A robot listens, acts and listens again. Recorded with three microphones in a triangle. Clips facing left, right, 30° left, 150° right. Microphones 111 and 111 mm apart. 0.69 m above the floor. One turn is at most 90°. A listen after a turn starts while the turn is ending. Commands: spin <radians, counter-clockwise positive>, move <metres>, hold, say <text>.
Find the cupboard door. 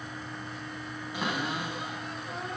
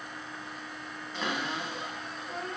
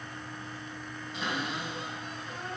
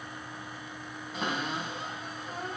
spin 1.57
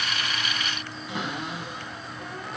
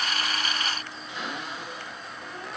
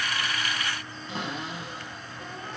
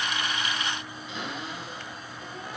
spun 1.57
spin 1.31
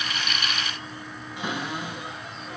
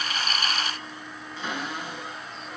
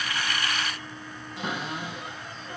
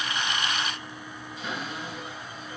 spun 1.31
spin 0.26
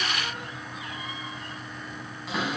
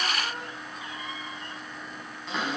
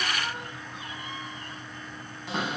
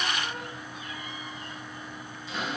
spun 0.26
say Facing the cupboard door, over 4 m away.